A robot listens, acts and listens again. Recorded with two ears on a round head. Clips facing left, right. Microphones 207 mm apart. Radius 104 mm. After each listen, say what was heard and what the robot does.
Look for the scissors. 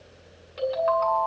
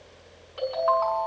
Keep listening.
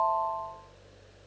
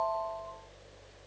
Keep listening.
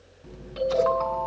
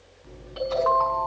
The scissors: about 70° left or 110° left. Turn 70° left.
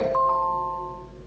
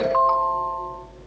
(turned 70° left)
So it is at 35° left. Turn 35° left.
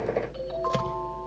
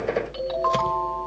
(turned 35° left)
Facing the scissors, 1 to 2 m away.